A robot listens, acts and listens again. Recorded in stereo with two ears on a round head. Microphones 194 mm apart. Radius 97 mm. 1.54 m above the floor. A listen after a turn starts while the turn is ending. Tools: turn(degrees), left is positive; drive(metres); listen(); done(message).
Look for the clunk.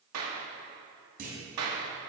turn(degrees=-45)
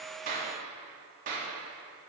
listen()
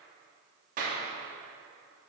done("I heard a clunk, but can't make it out now. It was about straight ahead or 90° right.")